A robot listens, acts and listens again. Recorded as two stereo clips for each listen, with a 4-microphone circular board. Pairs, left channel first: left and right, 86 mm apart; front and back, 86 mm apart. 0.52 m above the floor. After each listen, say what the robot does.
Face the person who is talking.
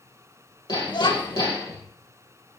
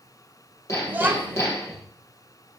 Turn 115° left.
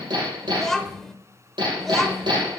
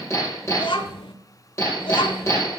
Found it: a child speaking, straight ahead, under 1 m away.